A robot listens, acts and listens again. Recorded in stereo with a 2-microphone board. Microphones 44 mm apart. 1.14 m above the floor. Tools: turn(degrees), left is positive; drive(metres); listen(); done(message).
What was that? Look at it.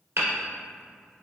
turn(degrees=-65)
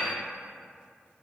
listen()
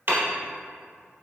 turn(degrees=-50)
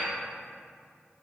listen()
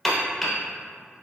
done("Found it: hammering, straight ahead.")